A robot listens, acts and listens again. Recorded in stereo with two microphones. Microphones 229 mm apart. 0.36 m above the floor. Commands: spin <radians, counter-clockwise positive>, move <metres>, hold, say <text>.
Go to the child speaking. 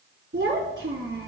spin -1.05
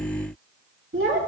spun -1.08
spin -0.96
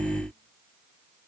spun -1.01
hold
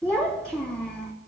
move 1.0
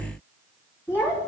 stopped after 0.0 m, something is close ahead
spin 0.17
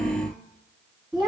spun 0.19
say Something is in my way. I am facing the child speaking but have not reached it.